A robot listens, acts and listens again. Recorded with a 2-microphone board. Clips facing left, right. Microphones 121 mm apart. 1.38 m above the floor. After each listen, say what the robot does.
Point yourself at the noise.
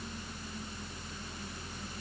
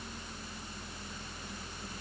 Keep listening.
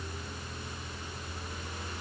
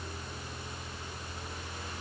Keep listening.
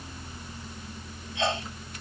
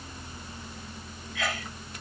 Turn 25° left.
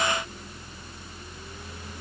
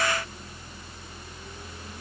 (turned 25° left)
Keep listening.
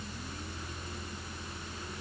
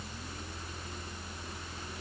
I heard a sneeze, but can't make it out now. It was about straight ahead or 130° left.